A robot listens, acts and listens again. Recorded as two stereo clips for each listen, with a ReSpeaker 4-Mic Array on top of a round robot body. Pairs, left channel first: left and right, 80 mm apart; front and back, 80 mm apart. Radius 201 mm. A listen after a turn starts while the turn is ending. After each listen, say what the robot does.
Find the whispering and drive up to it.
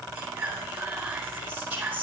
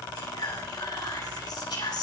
Turn 20° right.
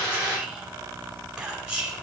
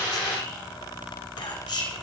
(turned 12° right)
Turn 10° right.
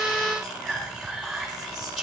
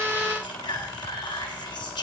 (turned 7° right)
Drive 1.0 m forward.
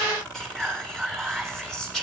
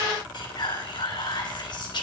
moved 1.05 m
Drive 1.0 m forward.
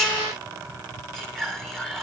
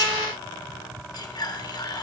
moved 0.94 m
Drive 1.0 m forward.
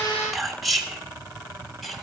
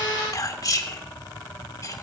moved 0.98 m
Drive 1.0 m forward.
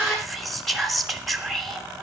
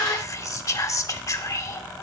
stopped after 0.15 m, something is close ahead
Arrived at the whispering, straight ahead.